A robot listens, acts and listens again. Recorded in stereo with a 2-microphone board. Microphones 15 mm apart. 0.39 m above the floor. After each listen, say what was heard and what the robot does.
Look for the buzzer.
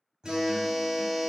Turn 30° right.
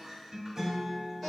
Keep listening.
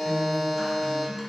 So it is at 15° left. Turn 15° left.
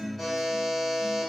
Facing the buzzer.